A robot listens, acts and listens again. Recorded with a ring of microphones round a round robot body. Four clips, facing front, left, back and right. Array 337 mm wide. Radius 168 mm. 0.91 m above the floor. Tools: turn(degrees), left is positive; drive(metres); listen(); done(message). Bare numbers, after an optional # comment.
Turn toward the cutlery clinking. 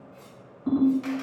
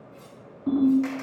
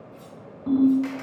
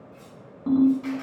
# The cutlery clinking: 160° right.
turn(-160)
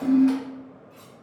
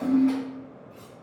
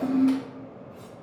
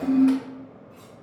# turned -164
done("Found it: cutlery clinking, straight ahead.")